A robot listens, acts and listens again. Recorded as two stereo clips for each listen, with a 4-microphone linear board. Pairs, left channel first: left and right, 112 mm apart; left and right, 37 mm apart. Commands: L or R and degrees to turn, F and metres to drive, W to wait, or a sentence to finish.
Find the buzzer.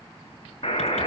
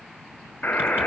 L50
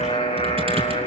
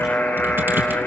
L75
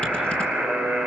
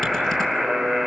Found it: a buzzer, straight ahead, over 4 m away.